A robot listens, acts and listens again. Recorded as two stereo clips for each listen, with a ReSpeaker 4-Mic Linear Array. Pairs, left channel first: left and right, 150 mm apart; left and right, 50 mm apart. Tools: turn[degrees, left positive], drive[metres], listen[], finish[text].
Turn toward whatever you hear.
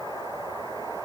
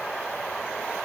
Action: listen[]
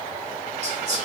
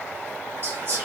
Thought: The whispering: about 50° right or 130° right.
Action: turn[-50]
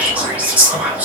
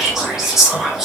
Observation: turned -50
Thought: So it is at 10° right.
Action: turn[-10]
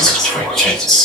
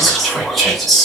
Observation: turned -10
Action: finish[Found it: whispering, straight ahead.]